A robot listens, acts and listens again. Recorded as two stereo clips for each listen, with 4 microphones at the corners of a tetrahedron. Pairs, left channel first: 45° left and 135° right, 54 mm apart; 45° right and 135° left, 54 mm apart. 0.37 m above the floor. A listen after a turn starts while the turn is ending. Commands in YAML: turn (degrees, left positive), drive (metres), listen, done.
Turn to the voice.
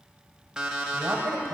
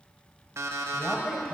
turn: -110
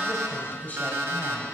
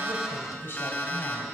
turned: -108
done: "Found it: a woman speaking, straight ahead."